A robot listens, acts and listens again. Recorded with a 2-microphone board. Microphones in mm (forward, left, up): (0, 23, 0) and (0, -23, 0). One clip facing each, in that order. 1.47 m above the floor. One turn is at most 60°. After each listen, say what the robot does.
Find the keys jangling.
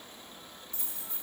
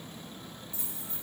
Turn 55° left.
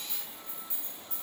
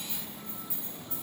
Turn 60° left.
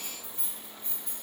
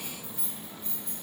Turn 30° left.
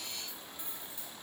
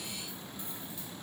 Keep listening.
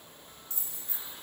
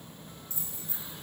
Turn 55° left.
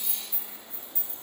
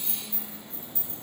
Turn 40° left.
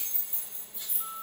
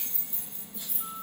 Turn 15° left.
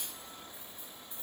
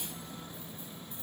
Keep listening.
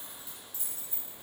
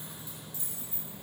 Found it: keys jangling, straight ahead.